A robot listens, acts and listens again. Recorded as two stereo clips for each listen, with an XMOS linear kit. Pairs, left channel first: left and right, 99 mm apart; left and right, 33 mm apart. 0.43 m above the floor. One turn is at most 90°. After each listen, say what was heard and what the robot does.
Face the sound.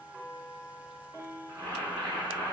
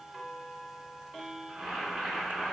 The boiling: about 35° right or 145° right. Turn 35° right.
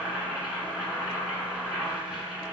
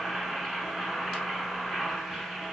Facing the boiling.